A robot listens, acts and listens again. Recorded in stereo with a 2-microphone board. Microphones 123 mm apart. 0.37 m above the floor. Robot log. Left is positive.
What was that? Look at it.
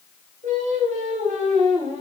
cmd yaw -90
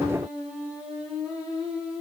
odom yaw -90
note: So it is at 10° right.
cmd yaw -10
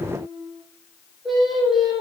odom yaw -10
end: Found it: singing, straight ahead.